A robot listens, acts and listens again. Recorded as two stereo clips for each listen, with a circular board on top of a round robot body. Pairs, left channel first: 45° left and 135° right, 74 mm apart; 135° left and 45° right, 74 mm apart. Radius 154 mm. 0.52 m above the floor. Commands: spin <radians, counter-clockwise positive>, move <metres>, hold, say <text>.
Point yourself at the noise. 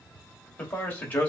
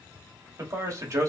spin -0.26
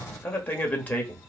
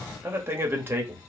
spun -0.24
spin -0.26
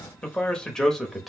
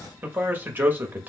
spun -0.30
spin -0.70
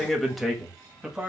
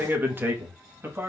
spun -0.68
spin -1.22
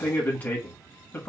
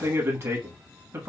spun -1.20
spin -0.17
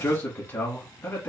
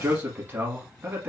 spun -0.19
say Facing the man speaking, 1 to 2 m away.